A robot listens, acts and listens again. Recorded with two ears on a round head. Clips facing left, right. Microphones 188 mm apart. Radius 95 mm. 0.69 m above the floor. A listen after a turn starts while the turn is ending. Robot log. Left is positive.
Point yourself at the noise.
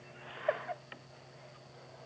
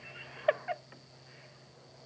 cmd idle
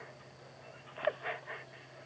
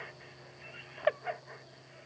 cmd idle
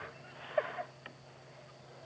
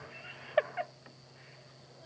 end: I can't make out anything to turn to.